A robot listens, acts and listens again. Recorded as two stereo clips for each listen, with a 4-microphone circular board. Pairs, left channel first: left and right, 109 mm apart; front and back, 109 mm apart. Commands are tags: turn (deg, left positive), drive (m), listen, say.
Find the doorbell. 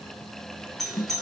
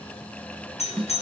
<say>Found it: a doorbell, straight ahead, 1 to 2 m away.</say>